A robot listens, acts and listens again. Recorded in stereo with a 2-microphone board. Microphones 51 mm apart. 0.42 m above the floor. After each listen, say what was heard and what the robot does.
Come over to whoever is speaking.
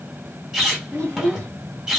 The child speaking: about 50° right or 130° right. Turn 50° right.
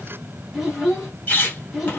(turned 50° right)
Drive 1.0 m forward.
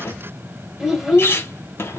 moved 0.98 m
The child speaking is now 10° right. Turn 10° right.
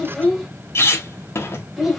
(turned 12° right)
Drive 1.0 m forward.
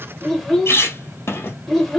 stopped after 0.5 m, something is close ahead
I am next to the child speaking.